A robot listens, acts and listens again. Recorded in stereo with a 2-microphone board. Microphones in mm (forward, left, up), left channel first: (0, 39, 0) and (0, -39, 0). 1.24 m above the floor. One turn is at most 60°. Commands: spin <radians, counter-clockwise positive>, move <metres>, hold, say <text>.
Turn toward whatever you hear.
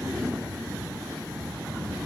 hold
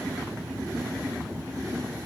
hold
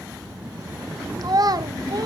spin -0.96
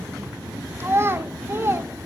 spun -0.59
spin -0.61
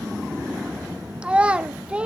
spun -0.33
spin -0.26
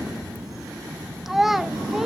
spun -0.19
say Found it: a child speaking, straight ahead, under 1 m away.